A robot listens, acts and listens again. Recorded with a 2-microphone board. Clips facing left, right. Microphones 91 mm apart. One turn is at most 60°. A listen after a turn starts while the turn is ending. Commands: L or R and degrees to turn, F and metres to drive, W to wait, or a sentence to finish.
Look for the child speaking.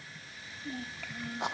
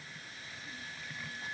L60
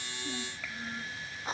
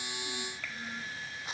Facing the child speaking.